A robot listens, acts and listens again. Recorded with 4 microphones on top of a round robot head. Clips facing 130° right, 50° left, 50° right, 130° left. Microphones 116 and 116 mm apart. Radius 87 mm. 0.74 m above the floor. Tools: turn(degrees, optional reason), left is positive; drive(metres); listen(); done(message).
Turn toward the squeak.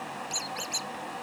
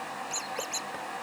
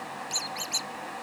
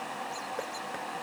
turn(degrees=-60, reason="The squeak: 60° right.")
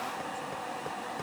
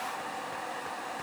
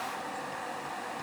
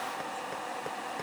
listen()
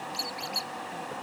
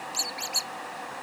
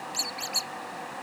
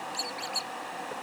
done("Facing the squeak.")